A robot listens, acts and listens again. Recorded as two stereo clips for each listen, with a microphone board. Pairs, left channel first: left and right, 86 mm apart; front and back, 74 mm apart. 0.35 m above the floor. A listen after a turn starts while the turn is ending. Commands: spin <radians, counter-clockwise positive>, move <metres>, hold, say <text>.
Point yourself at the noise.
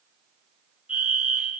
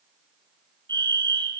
spin -2.88
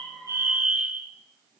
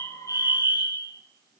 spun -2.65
spin -0.26
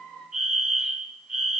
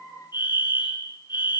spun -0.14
say Found it: a fire alarm, straight ahead, over 4 m away.